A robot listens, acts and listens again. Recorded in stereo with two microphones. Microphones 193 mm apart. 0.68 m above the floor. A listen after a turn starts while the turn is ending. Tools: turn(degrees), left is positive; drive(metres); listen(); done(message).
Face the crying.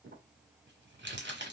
listen()
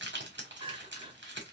turn(degrees=-30)
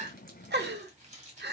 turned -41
turn(degrees=-110)
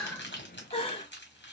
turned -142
turn(degrees=35)
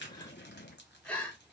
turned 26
done("Found it: crying, straight ahead, under 1 m away.")